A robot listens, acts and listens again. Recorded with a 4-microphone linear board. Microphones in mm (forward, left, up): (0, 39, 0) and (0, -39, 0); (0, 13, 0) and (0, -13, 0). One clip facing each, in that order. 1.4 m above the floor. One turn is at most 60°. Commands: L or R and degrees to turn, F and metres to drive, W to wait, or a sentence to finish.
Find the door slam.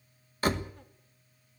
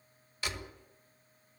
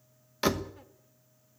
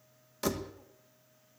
L45
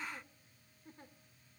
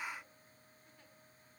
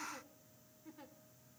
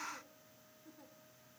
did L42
W
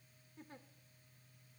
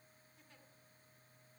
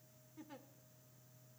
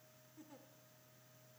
I heard a door slam, but can't make it out now. It was about straight ahead or 95° left.